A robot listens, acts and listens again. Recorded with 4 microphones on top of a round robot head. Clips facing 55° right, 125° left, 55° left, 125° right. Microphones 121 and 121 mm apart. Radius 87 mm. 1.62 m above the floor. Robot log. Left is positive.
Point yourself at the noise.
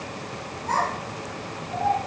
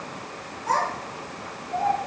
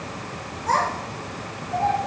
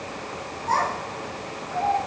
note: The child speaking: 70° left.
cmd yaw +70
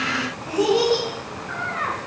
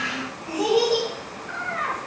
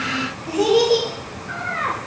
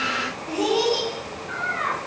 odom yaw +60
note: The child speaking is now 10° left.
cmd yaw +10
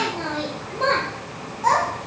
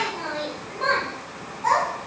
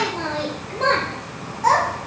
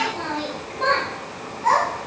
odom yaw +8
end: Found it: a child speaking, straight ahead.